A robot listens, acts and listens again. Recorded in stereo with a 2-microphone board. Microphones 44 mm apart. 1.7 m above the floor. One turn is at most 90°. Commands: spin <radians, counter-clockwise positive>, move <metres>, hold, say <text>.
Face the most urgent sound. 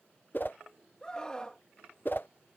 spin 0.35
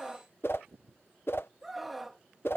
say Facing the scream.